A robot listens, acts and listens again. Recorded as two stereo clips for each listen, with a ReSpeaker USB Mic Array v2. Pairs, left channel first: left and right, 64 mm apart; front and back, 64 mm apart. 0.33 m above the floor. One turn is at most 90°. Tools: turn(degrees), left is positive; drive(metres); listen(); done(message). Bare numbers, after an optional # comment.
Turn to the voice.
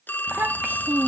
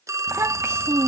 # The child speaking: 150° right.
turn(-90)
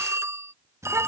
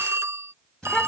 # The child speaking is now 70° right.
turn(-70)
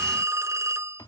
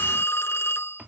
listen()
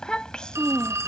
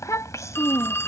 # The child speaking is now 15° left.
turn(15)
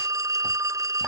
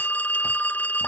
listen()
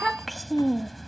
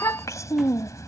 done("Found it: a child speaking, straight ahead.")